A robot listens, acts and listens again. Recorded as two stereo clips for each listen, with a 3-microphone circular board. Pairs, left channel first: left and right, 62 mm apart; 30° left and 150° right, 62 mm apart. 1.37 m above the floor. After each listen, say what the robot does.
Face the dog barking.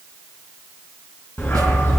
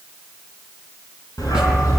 Turn 40° left.
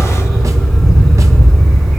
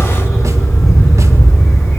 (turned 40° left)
Facing the dog barking.